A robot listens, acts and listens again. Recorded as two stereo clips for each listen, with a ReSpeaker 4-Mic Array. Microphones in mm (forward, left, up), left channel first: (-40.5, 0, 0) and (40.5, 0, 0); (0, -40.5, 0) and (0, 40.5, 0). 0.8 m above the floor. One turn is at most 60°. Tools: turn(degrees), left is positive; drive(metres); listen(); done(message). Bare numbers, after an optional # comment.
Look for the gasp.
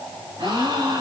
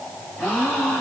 # The gasp: 15° right.
turn(-15)
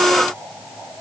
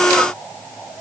done("I heard a gasp from this way, but can't make it out now.")